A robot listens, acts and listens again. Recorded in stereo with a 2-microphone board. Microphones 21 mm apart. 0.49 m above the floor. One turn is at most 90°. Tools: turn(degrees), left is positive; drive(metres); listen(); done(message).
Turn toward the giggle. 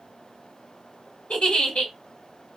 turn(degrees=60)
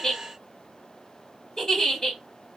turn(degrees=40)
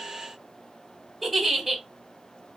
done("Facing the giggle, 1 to 2 m away.")